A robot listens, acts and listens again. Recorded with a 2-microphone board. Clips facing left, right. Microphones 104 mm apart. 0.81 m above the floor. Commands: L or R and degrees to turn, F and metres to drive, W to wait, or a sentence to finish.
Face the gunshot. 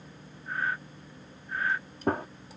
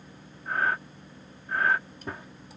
L55
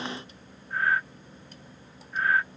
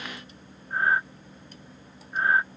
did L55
W
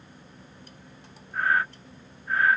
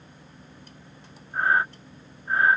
I heard a gunshot, but can't make it out now. It was about straight ahead or 70° left.